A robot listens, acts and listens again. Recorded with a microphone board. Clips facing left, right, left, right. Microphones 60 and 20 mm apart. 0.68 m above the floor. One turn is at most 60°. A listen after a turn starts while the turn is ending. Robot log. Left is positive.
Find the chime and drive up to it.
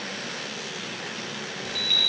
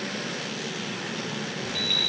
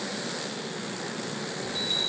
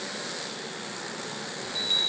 cmd yaw -30
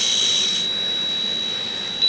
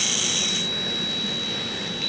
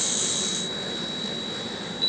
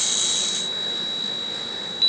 note: So it is at 145° right.
cmd yaw -60
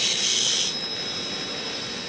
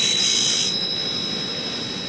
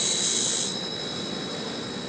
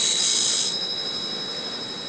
note: The chime is now 85° right.
cmd yaw -60
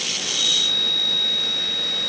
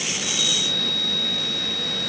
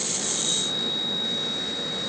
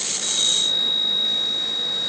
note: The chime is now 40° right.
cmd yaw -40
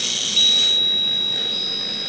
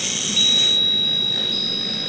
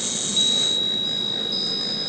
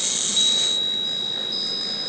cmd fwd 1.0
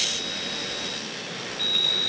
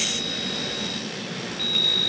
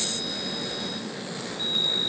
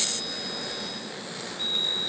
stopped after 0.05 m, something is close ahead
end: Blocked. The chime is further on, straight ahead.